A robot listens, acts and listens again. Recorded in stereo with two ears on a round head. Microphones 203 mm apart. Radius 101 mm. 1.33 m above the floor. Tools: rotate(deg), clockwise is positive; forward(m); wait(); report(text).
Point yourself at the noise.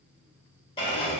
rotate(-25)
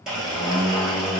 report("Facing the blender, 1 to 2 m away.")